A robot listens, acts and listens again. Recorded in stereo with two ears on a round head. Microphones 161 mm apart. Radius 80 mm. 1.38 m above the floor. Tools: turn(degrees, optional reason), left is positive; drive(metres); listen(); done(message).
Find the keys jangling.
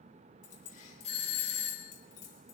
turn(degrees=45, reason="The keys jangling: about 45° left or 135° left.")
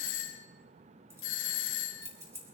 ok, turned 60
turn(degrees=-15, reason="So it is at 15° right.")
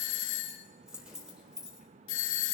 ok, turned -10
done("Found it: keys jangling, straight ahead.")